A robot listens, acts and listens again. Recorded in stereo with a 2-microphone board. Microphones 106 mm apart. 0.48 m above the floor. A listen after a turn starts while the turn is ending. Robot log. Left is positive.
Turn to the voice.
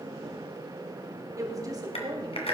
note: The woman speaking: about 40° right or 140° right.
cmd yaw -40
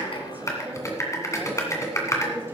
cmd idle
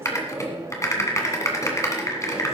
cmd idle
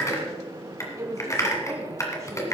note: The woman speaking: about 30° right or 150° right.
cmd yaw -30
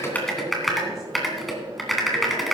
cmd idle
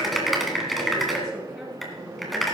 cmd idle
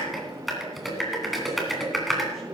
end: I heard a woman speaking, but can't make it out now. It was about straight ahead or 120° right.